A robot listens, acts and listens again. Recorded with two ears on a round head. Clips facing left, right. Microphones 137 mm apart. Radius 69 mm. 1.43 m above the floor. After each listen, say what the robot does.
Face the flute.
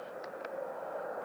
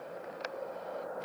Keep listening.
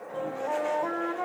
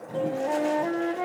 Turn 25° right.
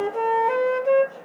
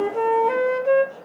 Found it: a flute, straight ahead.